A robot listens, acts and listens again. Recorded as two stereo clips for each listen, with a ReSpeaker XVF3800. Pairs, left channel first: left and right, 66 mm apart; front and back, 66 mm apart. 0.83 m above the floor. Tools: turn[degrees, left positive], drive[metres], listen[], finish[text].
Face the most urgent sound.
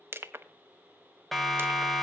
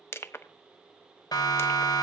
Action: finish[Facing the siren, 2 to 4 m away.]